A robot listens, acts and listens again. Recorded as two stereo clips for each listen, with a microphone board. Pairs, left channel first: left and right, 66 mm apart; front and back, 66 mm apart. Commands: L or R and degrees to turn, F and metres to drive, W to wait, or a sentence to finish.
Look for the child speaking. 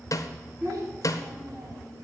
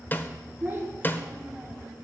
R110
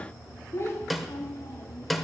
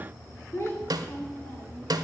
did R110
L55
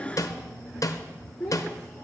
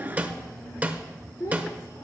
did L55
L15
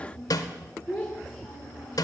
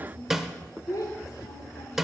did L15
Facing the child speaking, 2 to 4 m away.